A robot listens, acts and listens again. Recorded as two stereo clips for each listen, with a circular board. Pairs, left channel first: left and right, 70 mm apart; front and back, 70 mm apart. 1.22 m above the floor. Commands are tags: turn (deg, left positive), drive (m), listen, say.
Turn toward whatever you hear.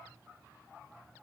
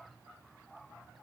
<listen/>
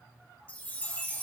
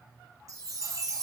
<turn deg="155"/>
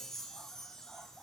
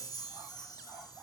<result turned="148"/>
<turn deg="10"/>
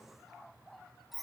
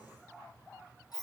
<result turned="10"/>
<say>Found it: a chime, straight ahead.</say>